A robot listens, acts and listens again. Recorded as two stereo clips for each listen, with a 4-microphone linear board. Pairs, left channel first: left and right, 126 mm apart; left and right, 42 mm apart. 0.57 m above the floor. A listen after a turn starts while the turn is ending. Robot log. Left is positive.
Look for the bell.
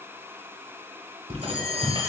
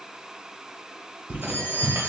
cmd yaw +90
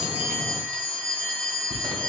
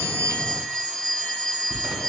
note: So it is at 15° left.
cmd yaw +15
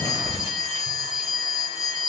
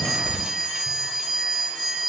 end: Facing the bell, 1 to 2 m away.